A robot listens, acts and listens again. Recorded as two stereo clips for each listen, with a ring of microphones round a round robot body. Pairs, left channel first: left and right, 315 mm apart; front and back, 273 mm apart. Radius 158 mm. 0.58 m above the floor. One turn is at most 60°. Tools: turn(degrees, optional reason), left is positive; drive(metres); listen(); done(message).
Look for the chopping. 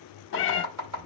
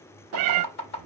turn(degrees=-55, reason="The chopping: 55° right.")
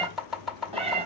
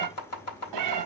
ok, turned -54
done("Found it: chopping, straight ahead, 2 to 4 m away.")